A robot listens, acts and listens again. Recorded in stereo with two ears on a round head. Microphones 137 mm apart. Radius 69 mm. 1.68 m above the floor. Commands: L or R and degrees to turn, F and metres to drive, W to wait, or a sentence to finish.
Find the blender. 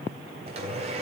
R40
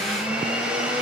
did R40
Found it: a blender, straight ahead, 2 to 4 m away.